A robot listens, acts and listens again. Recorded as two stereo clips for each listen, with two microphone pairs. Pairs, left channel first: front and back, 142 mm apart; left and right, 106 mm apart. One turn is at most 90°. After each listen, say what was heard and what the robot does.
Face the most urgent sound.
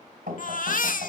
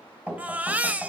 The baby crying: 15° right. Turn 15° right.
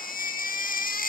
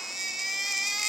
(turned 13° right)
Facing the baby crying.